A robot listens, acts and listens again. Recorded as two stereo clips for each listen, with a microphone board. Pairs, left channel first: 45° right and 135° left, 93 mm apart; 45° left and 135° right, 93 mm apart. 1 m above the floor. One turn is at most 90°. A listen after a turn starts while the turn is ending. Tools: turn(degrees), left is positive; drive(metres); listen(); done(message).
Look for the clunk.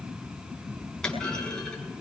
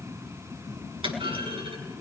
turn(degrees=-90)
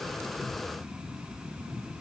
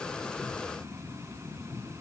turn(degrees=-35)
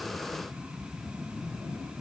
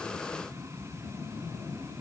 done("Facing where the clunk came from. I can't hear it now.")